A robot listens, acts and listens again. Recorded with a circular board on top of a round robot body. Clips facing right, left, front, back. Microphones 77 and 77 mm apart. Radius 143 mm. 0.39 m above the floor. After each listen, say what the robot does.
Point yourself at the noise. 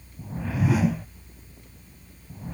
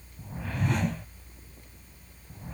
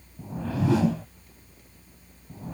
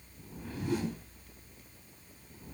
Found it: a whoosh, straight ahead.